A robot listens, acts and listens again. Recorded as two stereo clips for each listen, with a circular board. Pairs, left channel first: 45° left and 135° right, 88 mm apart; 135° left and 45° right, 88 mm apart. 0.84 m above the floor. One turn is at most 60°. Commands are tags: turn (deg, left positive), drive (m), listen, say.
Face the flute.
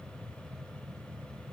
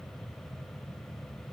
<listen/>
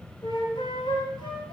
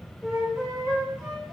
<turn deg="35"/>
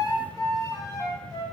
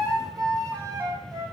<say>Found it: a flute, straight ahead, 2 to 4 m away.</say>